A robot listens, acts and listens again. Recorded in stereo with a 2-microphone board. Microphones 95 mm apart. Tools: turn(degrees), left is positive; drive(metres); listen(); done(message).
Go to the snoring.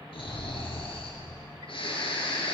turn(degrees=75)
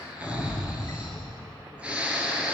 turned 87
turn(degrees=-15)
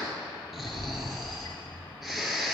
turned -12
drive(metres=1.0)
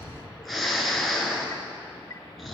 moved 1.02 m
drive(metres=1.0)
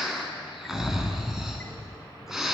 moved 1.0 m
drive(metres=1.0)
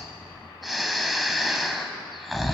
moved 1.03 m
drive(metres=1.0)
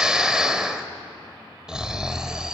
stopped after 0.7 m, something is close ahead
turn(degrees=-10)
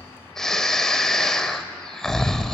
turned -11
done("Arrived at the snoring, straight ahead.")